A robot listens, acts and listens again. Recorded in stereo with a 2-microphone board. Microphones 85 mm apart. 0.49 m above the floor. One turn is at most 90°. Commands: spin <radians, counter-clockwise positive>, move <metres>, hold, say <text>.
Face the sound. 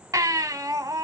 spin -0.79
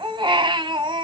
spin -1.57
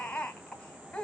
spin 0.26
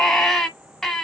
say Facing the baby crying, 1 to 2 m away.